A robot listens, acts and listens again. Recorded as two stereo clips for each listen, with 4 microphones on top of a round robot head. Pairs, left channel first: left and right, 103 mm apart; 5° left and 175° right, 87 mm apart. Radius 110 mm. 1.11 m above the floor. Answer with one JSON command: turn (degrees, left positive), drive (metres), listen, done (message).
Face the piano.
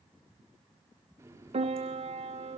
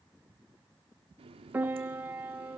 {"turn": -105}
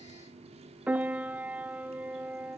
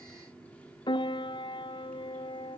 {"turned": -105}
{"turn": -15}
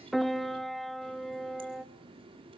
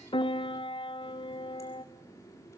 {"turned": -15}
{"done": "Facing the piano."}